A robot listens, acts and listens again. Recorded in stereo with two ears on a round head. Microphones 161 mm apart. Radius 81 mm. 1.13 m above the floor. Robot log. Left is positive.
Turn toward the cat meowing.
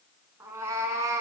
note: The cat meowing: about 15° right or 165° right.
cmd yaw -15
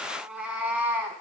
cmd yaw -30
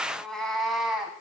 cmd yaw -30
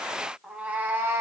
note: The cat meowing: about 15° right or 165° right.
cmd yaw -15
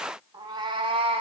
note: The cat meowing: about 35° right or 145° right.
cmd yaw -35
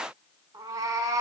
note: The cat meowing: about 20° right or 160° right.
cmd yaw -20
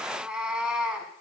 cmd yaw -30
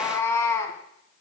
note: So it is at 15° left.
cmd yaw +15
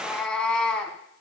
end: Found it: a cat meowing, straight ahead, 1 to 2 m away.